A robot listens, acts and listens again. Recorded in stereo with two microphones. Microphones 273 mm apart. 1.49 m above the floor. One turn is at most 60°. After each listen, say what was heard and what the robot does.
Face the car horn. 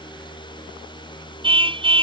The car horn: about 20° right or 160° right. Turn 20° right.
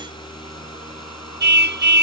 So it is at 140° right. Turn 60° right.
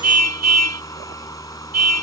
The car horn is now 75° right. Turn 60° right.
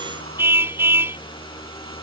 The car horn is now 10° right. Turn 10° right.
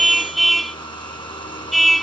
Found it: a car horn, straight ahead.